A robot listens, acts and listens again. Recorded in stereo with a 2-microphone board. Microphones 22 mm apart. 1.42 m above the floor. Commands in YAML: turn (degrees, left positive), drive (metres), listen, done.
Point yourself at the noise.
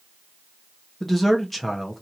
turn: 30
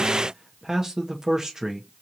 turn: -30
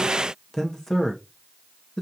turn: 15
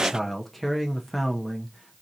done: "Facing the man speaking, under 1 m away."